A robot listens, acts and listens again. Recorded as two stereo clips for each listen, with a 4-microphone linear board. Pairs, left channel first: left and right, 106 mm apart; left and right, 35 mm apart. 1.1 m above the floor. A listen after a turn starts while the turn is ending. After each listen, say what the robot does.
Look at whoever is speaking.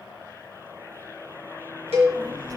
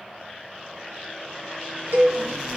Turn 35° right.
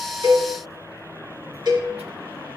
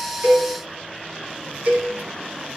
Turn 110° right.
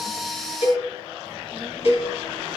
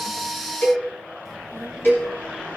Facing the child speaking, 1 to 2 m away.